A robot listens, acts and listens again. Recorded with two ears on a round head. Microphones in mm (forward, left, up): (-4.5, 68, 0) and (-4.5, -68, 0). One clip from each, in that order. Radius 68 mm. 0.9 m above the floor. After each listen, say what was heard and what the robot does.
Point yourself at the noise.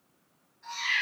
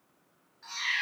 The cat meowing: about 60° right or 120° right. Turn 60° right.
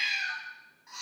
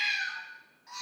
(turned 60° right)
So it is at 10° right. Turn 10° right.
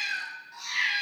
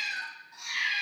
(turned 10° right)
The cat meowing is now 20° left. Turn 20° left.
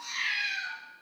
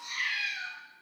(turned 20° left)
The cat meowing is now 20° left. Turn 20° left.
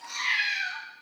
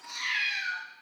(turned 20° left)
The cat meowing is now 15° left. Turn 15° left.
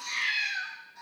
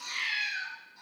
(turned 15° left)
The cat meowing is now 10° left. Turn 10° left.
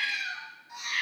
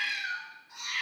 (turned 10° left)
Found it: a cat meowing, straight ahead.